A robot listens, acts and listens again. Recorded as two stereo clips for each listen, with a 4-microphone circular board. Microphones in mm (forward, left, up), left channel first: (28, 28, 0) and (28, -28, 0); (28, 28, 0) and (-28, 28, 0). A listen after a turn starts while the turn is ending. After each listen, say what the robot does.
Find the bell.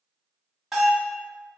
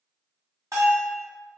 Turn 180° left.
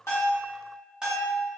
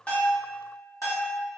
Turn 15° right.
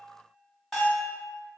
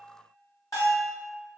Facing the bell.